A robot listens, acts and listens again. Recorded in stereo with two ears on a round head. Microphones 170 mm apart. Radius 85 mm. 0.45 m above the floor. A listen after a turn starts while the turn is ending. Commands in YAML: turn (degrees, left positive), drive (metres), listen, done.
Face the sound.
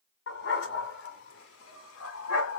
turn: 90
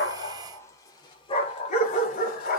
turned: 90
turn: 50
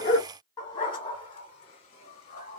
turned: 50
turn: 35
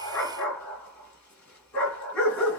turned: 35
done: "Found it: a dog barking, straight ahead."